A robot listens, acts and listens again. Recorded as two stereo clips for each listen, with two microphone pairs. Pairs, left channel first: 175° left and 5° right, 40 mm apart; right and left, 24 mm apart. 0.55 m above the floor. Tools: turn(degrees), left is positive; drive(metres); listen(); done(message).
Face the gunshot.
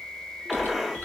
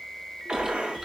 turn(degrees=90)
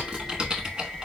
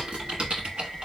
done("Facing where the gunshot came from. I can't hear it now.")